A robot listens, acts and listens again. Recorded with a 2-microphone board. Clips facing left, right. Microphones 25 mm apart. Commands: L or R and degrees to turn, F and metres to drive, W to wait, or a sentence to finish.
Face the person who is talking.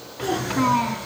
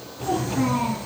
L55
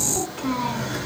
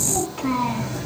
Facing the child speaking, 2 to 4 m away.